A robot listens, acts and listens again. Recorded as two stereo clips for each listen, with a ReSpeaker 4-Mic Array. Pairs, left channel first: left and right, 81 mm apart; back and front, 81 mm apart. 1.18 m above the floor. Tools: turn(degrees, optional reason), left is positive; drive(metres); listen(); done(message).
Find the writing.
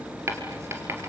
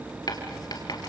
turn(degrees=-145, reason="The writing: 145° right.")
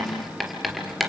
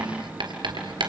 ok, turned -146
done("Found it: writing, straight ahead.")